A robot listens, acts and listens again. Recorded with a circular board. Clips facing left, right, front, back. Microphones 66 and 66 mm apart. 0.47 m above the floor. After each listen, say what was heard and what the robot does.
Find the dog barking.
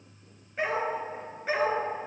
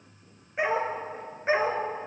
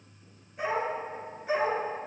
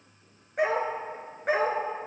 The dog barking: 155° right. Turn 155° right.
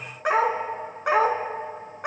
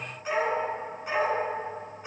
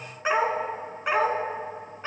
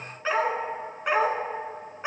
The dog barking is now 110° left. Turn 110° left.
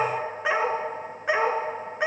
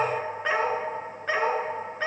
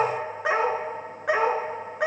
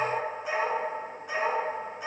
The dog barking is now 15° left. Turn 15° left.
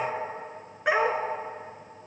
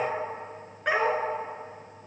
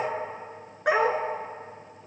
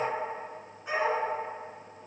The dog barking is now 10° left. Turn 10° left.
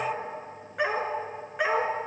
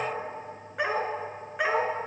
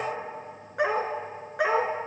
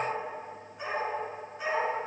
Found it: a dog barking, straight ahead, 1 to 2 m away.